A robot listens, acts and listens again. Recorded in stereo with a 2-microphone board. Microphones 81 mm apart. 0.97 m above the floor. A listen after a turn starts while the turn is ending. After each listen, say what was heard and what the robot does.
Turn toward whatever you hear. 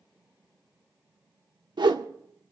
The whoosh: about 65° right or 115° right. Turn 65° right.
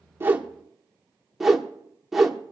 Facing the whoosh.